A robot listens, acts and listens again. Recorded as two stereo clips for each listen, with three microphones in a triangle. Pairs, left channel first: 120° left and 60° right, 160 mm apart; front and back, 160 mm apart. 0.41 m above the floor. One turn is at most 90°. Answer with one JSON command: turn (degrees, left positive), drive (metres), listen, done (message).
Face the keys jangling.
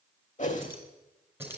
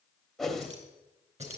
{"turn": -90}
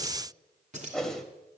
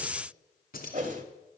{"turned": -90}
{"turn": -20}
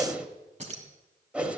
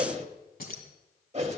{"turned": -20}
{"turn": -20}
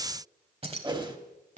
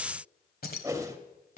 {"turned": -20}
{"turn": -25}
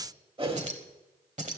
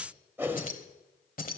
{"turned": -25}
{"turn": -25}
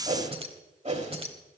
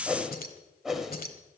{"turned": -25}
{"turn": -10}
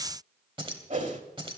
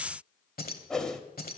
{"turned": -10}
{"done": "Facing the keys jangling."}